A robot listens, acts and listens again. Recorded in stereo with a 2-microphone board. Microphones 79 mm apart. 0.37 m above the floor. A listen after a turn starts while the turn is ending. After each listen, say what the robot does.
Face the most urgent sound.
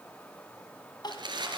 Turn 55° left.
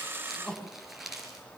Turn 10° left.
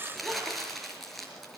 Keep listening.
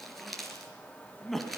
Facing the crying, 2 to 4 m away.